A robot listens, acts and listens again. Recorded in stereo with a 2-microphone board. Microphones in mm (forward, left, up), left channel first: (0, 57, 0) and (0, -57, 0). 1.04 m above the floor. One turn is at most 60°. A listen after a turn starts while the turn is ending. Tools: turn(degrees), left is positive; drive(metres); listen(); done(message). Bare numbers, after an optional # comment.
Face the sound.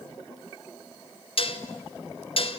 # The dishes clattering: about 50° left or 130° left.
turn(50)
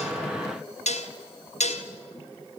# So it is at 75° left.
turn(60)
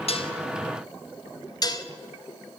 # The dishes clattering is now 35° left.
turn(35)
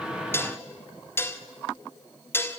# The dishes clattering is now 20° left.
turn(20)
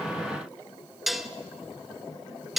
done("Facing the dishes clattering, 1 to 2 m away.")